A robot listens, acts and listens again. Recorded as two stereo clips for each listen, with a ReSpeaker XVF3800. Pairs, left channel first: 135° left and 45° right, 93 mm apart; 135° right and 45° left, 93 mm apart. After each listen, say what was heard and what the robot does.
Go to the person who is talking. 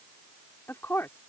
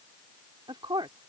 The woman speaking: 70° left. Turn 70° left.
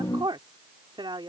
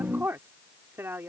The woman speaking is now 20° right. Turn 20° right.
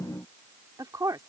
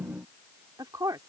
Drive 1.0 m forward.
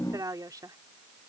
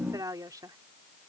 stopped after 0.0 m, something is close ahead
Blocked. The woman speaking is further on, straight ahead.